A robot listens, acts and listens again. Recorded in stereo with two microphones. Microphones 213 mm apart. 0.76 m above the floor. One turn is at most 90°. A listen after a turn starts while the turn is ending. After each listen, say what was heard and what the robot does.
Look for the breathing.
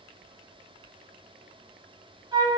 Keep listening.
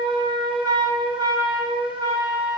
Keep listening.
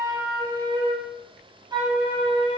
I can't make out breathing, only a flute.